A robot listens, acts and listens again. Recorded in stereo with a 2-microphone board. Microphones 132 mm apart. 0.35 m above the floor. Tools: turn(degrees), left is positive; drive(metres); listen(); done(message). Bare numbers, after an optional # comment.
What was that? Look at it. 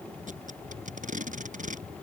turn(-90)
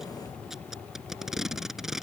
done("Facing the tape being pulled.")